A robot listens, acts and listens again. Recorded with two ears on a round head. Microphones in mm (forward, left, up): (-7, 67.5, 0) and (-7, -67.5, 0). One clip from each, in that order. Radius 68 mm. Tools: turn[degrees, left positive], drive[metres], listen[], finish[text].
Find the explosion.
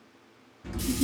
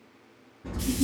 Action: turn[90]
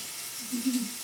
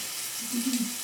Action: finish[Facing where the explosion came from. I can't hear it now.]